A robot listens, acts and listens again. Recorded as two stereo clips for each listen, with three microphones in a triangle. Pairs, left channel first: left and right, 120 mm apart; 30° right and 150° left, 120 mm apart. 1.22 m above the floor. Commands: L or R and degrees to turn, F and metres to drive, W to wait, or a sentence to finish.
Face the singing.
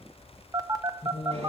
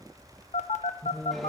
L50
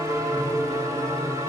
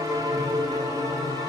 W
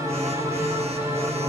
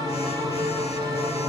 W
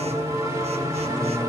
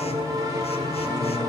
L15
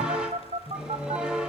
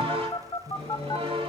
Found it: singing, straight ahead, under 1 m away.